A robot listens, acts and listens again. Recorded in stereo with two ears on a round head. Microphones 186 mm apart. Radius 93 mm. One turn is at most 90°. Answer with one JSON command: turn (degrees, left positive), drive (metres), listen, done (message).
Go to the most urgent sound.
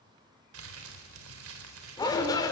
{"turn": 20}
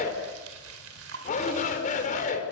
{"turn": 90}
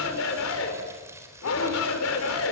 {"turn": 70}
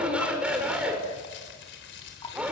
{"drive": 1.0}
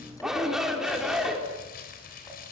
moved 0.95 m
{"drive": 1.0}
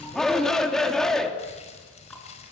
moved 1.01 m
{"drive": 1.0}
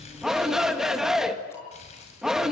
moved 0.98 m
{"drive": 1.0}
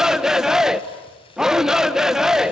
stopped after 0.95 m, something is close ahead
{"done": "I am next to the shout."}